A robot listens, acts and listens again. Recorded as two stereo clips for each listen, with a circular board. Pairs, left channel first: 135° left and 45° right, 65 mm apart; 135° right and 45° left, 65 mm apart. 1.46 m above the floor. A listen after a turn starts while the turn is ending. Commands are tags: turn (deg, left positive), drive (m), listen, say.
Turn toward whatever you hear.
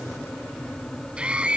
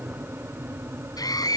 <turn deg="-120"/>
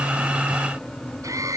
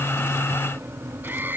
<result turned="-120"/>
<listen/>
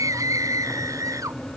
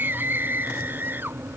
<turn deg="-15"/>
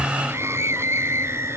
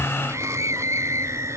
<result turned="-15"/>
<say>Found it: a scream, straight ahead.</say>